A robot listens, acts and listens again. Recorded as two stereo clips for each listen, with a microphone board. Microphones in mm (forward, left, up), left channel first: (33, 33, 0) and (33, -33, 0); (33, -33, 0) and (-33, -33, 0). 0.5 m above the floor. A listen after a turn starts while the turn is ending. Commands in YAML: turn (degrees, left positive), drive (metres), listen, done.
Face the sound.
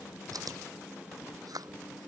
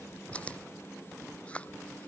turn: -70
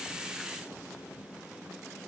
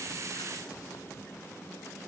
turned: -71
listen: true
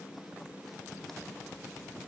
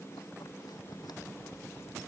listen: true
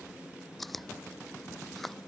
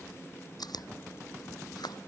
done: "Found it: chewing, straight ahead."